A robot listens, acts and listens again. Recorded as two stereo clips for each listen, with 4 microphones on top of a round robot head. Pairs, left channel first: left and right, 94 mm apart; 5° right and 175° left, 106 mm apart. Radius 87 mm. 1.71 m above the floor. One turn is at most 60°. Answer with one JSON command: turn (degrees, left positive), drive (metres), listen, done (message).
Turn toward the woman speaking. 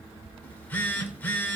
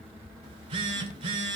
{"listen": true}
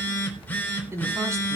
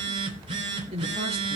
{"turn": -60}
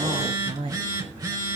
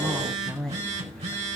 {"turn": -60}
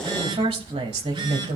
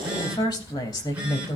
{"turn": -60}
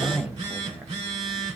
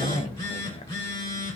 {"turn": -15}
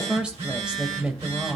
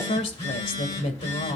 {"turn": -10}
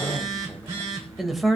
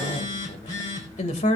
{"done": "Found it: a woman speaking, straight ahead."}